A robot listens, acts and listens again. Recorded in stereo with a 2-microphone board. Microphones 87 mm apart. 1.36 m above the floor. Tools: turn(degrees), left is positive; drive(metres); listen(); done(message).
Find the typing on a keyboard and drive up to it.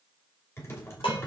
turn(degrees=30)
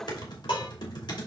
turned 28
turn(degrees=120)
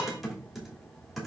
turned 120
drive(metres=1.0)
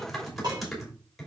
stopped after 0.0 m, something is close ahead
done("Something is in my way. I am facing the typing on a keyboard but have not reached it.")